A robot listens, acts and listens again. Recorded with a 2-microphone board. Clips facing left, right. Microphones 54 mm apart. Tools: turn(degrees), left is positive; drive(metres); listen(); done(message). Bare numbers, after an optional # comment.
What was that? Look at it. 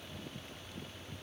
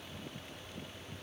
listen()
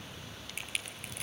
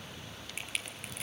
turn(30)
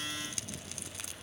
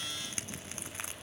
# So it is at 30° right.
turn(-30)
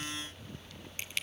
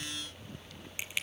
# The crushing is now 15° right.
turn(-15)
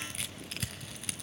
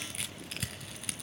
done("Found it: crushing, straight ahead, 1 to 2 m away.")